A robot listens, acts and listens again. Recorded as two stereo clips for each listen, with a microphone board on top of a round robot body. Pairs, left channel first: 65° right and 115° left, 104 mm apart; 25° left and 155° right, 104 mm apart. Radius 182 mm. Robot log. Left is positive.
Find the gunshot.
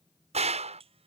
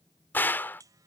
note: The gunshot: 95° left.
cmd yaw +95
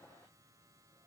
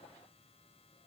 end: I heard a gunshot from this way, but can't make it out now.